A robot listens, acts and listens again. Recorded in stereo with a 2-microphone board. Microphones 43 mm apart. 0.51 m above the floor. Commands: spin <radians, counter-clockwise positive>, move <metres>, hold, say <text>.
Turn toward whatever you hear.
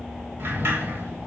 spin -1.13
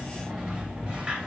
spin -0.44
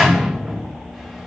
say Facing the sliding door, 2 to 4 m away.